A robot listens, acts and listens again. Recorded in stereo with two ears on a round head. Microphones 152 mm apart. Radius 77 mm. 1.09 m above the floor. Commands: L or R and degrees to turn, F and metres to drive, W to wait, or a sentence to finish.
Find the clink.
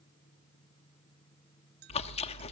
R70
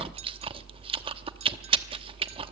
W
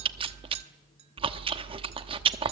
W
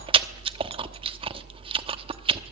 I heard a clink, but can't make it out now. It was about straight ahead or 40° right.